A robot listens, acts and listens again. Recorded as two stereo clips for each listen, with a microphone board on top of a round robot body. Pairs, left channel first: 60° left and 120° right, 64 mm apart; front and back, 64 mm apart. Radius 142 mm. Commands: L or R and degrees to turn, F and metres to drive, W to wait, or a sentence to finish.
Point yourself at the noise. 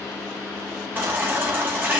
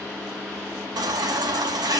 L180
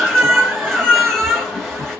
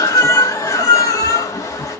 R25
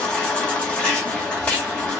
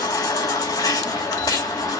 R15
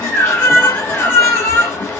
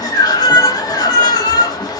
Found it: a baby crying, straight ahead.